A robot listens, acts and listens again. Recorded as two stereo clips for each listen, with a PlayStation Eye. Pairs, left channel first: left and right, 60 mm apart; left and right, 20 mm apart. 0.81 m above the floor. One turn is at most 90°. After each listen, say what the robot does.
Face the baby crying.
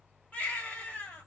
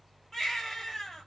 Turn 25° left.
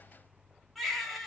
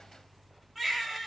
Facing the baby crying, 1 to 2 m away.